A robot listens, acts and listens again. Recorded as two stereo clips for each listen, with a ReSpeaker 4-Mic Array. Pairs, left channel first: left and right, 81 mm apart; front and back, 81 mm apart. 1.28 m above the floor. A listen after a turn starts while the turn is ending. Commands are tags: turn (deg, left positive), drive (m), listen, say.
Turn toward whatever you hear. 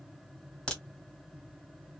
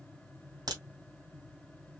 <turn deg="170"/>
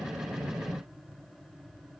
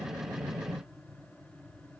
<say>Facing where the crack came from. I can't hear it now.</say>